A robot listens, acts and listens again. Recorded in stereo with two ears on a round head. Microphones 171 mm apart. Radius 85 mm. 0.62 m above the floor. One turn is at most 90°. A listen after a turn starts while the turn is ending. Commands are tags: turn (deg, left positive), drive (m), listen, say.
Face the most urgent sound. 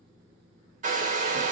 <listen/>
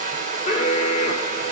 <turn deg="30"/>
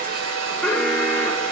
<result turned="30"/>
<say>Found it: an alarm, straight ahead.</say>